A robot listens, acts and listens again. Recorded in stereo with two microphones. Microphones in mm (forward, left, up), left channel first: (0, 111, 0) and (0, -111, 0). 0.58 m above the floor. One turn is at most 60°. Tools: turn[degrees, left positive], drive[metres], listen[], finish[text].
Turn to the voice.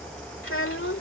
Thought: The child speaking: about 65° left or 115° left.
Action: turn[60]
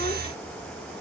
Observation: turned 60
Action: listen[]
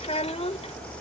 Thought: So it is at 30° left.
Action: turn[30]
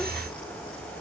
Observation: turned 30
Action: listen[]
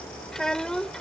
Action: finish[Found it: a child speaking, straight ahead.]